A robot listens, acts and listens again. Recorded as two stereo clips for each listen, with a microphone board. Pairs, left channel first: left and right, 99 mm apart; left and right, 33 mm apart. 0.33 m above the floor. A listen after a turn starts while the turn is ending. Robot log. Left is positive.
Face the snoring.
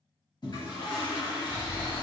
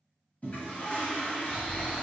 note: The snoring: about 55° left or 125° left.
cmd yaw +55
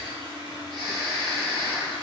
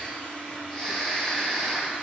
note: So it is at 10° left.
cmd yaw +10
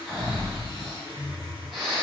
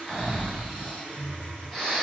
end: Facing the snoring.